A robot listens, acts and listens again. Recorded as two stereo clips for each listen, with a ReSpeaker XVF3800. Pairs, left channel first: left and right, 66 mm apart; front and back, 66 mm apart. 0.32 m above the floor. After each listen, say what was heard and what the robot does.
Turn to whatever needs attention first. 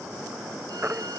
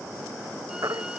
The baby crying: 150° right. Turn 150° right.
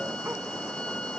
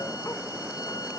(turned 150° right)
Keep listening.
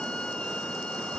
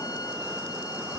Keep listening.
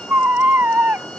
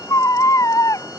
The baby crying is now 35° right. Turn 35° right.
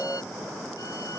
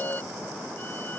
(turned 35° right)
Keep listening.
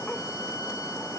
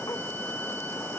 Keep listening.
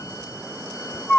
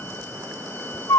The baby crying is now 15° left. Turn 15° left.
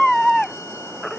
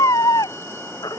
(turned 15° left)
Found it: a baby crying, straight ahead.